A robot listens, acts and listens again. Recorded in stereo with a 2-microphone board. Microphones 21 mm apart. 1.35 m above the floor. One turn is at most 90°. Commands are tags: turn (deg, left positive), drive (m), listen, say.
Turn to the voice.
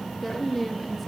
<turn deg="30"/>
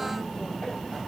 <listen/>
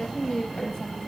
<turn deg="90"/>
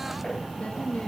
<turn deg="55"/>
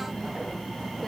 <listen/>
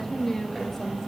<turn deg="15"/>
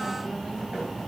<listen/>
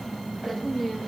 <say>Found it: a woman speaking, straight ahead, 1 to 2 m away.</say>